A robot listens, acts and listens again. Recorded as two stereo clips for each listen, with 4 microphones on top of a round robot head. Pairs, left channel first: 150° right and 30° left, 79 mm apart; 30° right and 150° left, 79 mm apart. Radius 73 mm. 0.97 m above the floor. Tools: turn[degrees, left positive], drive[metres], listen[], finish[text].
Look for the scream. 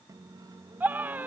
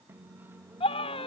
Thought: The scream: 40° right.
Action: turn[-40]
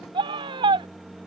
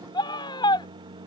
Action: finish[Facing the scream.]